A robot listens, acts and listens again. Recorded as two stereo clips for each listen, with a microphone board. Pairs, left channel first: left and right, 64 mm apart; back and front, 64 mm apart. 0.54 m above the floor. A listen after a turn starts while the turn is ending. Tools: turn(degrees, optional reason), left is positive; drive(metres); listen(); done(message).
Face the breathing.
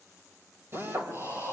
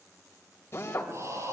turn(degrees=-45, reason="The breathing: 45° right.")
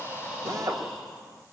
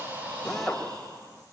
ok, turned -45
done("Found it: breathing, straight ahead.")